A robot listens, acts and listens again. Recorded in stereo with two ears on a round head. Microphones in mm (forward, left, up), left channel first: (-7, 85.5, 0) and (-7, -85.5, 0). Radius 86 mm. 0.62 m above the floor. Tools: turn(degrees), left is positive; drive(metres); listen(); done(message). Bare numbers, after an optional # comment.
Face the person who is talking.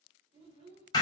# The child speaking: about 30° right or 150° right.
turn(-30)
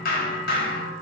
listen()
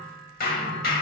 listen()
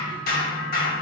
done("I heard a child speaking, but can't make it out now. It was about straight ahead or 120° right.")